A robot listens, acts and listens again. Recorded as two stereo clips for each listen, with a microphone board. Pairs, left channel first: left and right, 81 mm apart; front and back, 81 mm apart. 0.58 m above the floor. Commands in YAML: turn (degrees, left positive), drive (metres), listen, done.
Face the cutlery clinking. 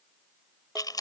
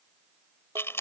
listen: true
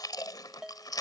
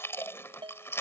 listen: true
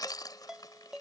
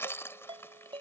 done: "I can't make out cutlery clinking, only chewing and a ringtone."